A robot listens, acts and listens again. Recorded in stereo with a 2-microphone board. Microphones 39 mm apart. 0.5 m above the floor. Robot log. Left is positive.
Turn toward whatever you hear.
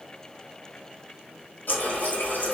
note: The running tap: about 70° left or 110° left.
cmd yaw +70
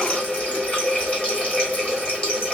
note: So it is at 35° left.
cmd yaw +35
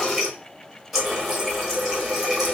end: Facing the running tap, 1 to 2 m away.